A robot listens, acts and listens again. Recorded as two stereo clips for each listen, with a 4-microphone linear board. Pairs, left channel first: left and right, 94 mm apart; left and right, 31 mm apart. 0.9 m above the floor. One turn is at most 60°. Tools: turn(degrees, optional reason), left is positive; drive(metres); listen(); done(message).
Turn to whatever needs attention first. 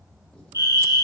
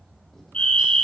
turn(degrees=40, reason="The fire alarm: about 40° left or 140° left.")
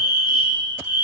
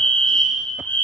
turn(degrees=60, reason="So it is at 90° left.")
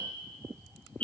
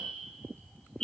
turn(degrees=20, reason="The fire alarm is now 20° left.")
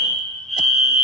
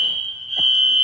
done("Found it: a fire alarm, straight ahead, 2 to 4 m away.")